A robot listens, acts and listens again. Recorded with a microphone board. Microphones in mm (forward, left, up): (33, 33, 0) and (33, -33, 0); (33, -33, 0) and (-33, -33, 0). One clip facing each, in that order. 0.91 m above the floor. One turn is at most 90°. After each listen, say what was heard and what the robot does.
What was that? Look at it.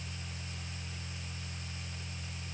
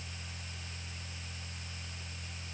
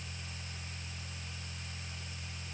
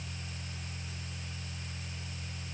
Keep listening.
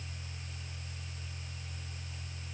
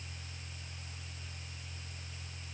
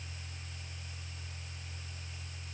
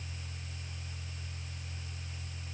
Keep listening.
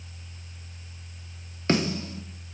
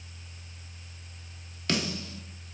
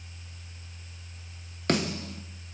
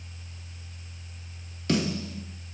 The snare drum: 30° left. Turn 30° left.
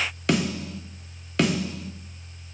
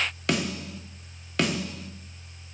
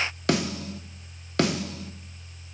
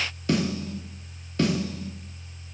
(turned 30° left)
Facing the snare drum, under 1 m away.